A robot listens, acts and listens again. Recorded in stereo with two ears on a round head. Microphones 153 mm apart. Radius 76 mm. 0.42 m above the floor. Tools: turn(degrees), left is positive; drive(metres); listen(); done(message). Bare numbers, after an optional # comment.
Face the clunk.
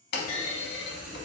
# The clunk: about 65° left or 115° left.
turn(65)
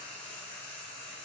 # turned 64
listen()
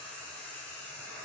done("I heard a clunk, but can't make it out now. It was about straight ahead or 50° left.")